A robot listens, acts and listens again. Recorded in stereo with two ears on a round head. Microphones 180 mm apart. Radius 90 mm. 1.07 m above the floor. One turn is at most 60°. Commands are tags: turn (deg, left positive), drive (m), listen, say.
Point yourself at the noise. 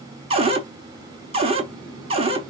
<turn deg="-30"/>
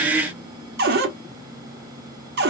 <turn deg="-60"/>
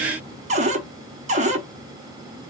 <turn deg="-40"/>
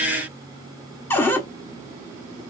<turn deg="10"/>
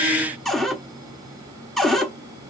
<say>Found it: a cupboard door, straight ahead.</say>